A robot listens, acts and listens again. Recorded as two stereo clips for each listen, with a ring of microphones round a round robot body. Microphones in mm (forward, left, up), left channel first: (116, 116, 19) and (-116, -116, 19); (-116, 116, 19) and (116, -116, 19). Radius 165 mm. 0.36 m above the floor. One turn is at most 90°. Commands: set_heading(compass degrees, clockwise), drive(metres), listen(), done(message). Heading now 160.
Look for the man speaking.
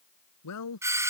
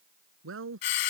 done("Found it: a man speaking, straight ahead.")